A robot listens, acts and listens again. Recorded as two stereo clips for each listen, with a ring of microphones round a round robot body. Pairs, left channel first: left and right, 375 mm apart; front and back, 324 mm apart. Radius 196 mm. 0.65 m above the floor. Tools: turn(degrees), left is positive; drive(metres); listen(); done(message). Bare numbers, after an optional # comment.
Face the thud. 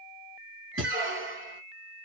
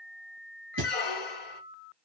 # The thud: 150° right.
turn(-150)
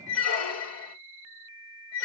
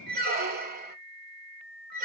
done("Facing where the thud came from. I can't hear it now.")